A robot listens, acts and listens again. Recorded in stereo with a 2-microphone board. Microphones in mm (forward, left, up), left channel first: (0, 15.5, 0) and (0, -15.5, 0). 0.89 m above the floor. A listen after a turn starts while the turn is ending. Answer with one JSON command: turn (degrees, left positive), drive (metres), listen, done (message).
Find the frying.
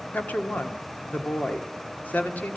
{"listen": true}
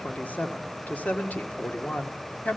{"listen": true}
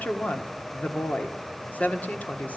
{"done": "I can't make out frying to turn to."}